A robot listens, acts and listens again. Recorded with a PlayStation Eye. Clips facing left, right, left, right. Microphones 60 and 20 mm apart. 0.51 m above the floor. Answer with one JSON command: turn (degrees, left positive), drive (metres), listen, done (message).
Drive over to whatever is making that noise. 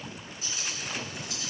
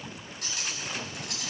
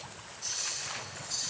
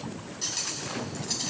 {"turn": -70}
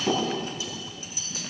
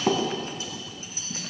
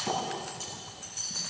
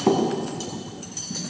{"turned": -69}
{"turn": -40}
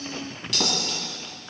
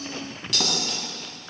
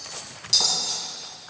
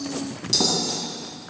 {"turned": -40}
{"drive": 1.0}
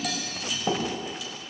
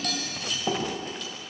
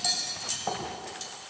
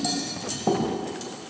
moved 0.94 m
{"drive": 1.0}
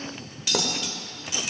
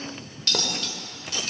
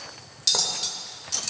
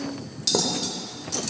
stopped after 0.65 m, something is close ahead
{"turn": 15}
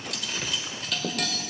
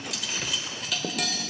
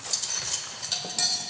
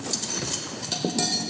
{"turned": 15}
{"done": "Arrived at the cutlery clinking, straight ahead."}